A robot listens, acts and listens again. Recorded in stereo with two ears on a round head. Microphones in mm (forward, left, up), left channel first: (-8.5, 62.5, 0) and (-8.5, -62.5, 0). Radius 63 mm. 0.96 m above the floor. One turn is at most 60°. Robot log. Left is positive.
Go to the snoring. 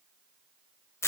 cmd idle
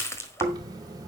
note: The snoring: about 30° right or 150° right.
cmd yaw -30
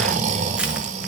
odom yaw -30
note: So it is at 120° right.
cmd yaw -60
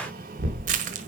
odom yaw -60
note: The snoring is now 65° right.
cmd yaw -60
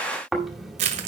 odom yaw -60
cmd fwd 1.0
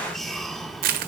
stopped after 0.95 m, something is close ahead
cmd idle
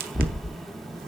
end: I am next to the snoring.